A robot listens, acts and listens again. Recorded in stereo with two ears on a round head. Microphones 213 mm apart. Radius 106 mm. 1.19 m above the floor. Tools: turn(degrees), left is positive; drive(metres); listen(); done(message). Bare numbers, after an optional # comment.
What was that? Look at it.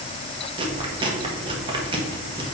# The chewing: about 20° right or 160° right.
turn(-20)
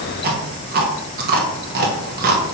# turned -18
# So it is at 140° right.
turn(-140)
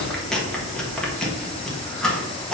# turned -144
done("Found it: chewing, straight ahead, 1 to 2 m away.")